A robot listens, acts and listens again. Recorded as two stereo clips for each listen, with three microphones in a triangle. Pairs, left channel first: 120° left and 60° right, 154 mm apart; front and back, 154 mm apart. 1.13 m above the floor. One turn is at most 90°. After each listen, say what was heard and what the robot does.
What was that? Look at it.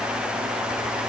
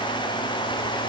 Keep listening.
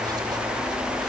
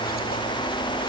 Keep listening.
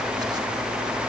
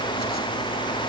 I can't make out anything to turn to.